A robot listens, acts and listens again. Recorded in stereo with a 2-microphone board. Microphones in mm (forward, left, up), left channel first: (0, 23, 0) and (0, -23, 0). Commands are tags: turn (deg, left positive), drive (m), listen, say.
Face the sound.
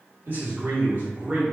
<turn deg="-30"/>
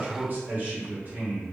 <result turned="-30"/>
<turn deg="-30"/>
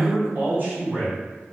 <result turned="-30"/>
<turn deg="-35"/>
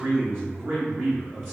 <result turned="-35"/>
<turn deg="-135"/>
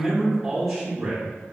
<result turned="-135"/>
<say>Found it: a man speaking, straight ahead.</say>